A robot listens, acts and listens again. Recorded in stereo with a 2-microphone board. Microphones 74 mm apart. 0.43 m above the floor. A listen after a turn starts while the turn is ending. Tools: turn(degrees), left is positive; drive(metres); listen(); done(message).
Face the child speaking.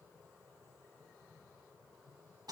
listen()
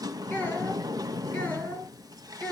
turn(degrees=20)
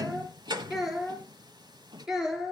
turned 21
turn(degrees=-10)
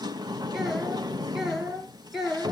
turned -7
done("Found it: a child speaking, straight ahead, over 4 m away.")